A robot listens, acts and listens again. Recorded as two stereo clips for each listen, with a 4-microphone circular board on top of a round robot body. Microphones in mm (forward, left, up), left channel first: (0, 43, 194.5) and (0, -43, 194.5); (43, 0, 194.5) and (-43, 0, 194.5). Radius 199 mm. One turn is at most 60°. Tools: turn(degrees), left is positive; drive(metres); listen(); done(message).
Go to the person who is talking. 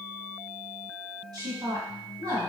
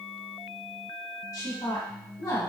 turn(degrees=-50)
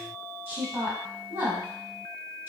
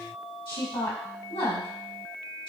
turn(degrees=-25)
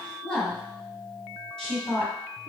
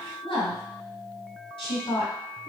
drive(metres=1.0)
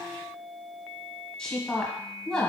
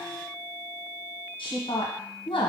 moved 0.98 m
turn(degrees=10)
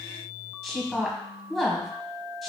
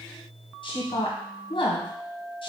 drive(metres=1.0)
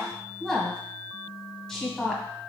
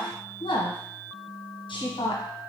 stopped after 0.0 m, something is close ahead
done("I am next to the woman speaking.")